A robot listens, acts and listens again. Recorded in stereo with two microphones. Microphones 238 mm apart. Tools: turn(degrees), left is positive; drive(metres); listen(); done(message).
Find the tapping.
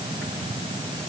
listen()
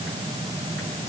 listen()
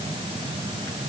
done("I can't make out tapping.")